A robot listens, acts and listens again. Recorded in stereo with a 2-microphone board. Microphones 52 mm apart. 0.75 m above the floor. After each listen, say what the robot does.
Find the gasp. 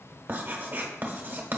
Keep listening.
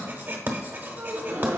Turn 65° right.
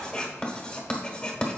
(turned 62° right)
Keep listening.
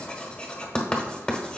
I heard a gasp, but can't make it out now. It was about 5° right or 55° right.